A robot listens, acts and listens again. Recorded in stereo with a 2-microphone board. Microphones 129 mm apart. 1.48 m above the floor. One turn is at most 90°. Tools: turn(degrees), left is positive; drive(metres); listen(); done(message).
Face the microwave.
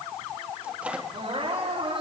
turn(degrees=-30)
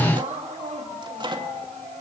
turn(degrees=-90)
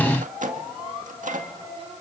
turn(degrees=-80)
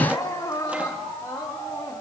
listen()
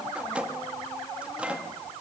turn(degrees=-10)
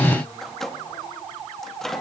done("Found it: a microwave, straight ahead, 2 to 4 m away.")